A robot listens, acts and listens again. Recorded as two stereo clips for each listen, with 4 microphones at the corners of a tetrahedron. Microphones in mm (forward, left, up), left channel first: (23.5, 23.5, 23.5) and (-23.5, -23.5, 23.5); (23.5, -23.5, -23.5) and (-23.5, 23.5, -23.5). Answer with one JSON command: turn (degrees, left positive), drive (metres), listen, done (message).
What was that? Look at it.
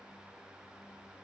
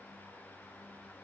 {"listen": true}
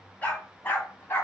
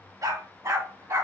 {"turn": 95}
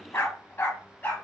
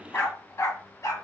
{"turn": -15}
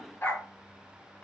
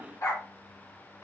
{"turn": -20}
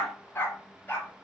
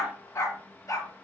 {"turn": -15}
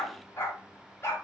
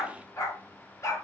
{"done": "Facing the dog barking, 1 to 2 m away."}